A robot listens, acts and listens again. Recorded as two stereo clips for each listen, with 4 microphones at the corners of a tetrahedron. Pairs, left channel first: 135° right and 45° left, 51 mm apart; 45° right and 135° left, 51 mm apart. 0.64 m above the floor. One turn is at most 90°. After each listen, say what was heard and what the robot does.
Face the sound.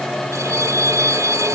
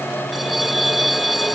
The bell: 45° left. Turn 45° left.
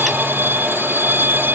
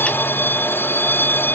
Found it: a bell, straight ahead.